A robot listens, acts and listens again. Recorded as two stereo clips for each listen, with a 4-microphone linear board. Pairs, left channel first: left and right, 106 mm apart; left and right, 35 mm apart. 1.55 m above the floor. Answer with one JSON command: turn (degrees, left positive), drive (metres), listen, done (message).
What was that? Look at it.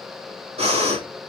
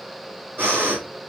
{"turn": -70}
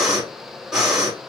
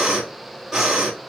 {"done": "Facing the breathing."}